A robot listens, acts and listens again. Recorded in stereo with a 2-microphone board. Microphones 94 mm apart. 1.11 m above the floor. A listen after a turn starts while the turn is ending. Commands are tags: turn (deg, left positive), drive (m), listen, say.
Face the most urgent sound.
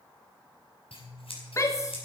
<turn deg="30"/>
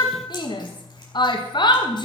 <turn deg="115"/>
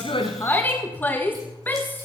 <turn deg="25"/>
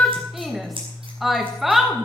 <say>Found it: a shout, straight ahead.</say>